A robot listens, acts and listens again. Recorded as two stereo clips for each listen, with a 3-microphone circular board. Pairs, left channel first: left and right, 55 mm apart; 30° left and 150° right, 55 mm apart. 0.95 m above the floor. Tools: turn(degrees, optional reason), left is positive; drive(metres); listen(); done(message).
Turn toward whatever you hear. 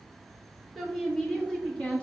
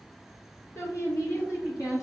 turn(degrees=25, reason="The woman speaking: 25° left.")
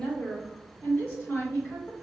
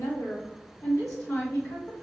turn(degrees=40, reason="The woman speaking is now 40° left.")
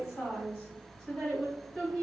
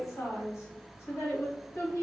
turn(degrees=10, reason="The woman speaking is now 10° left.")
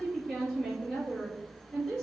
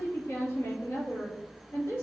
done("Facing the woman speaking, 2 to 4 m away.")